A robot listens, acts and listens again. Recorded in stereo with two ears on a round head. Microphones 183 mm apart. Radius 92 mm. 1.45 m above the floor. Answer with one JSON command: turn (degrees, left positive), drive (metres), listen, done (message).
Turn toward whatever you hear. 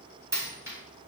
{"turn": -30}
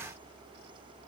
{"listen": true}
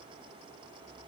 {"done": "I heard a dropped coin, but can't make it out now. It was about 20° left or 140° right."}